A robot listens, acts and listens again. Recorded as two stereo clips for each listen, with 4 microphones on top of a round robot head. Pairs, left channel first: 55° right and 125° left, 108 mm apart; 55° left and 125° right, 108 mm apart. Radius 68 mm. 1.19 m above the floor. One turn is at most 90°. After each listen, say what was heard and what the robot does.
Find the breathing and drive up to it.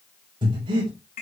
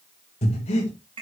The breathing: 80° left. Turn 80° left.
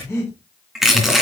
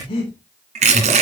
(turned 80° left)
The breathing is now 10° left. Turn 10° left.
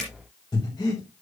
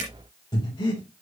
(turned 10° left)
Drive 1.0 m forward.
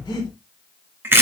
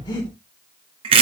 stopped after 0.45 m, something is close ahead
Something is in my way. I am facing the breathing but have not reached it.